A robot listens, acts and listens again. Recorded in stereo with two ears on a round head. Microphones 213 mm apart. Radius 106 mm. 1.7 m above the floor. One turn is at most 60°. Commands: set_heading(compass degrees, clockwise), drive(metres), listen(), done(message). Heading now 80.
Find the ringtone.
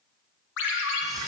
set_heading(25)
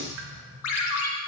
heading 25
set_heading(325)
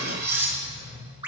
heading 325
set_heading(335)
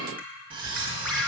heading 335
done("Found it: a ringtone, straight ahead.")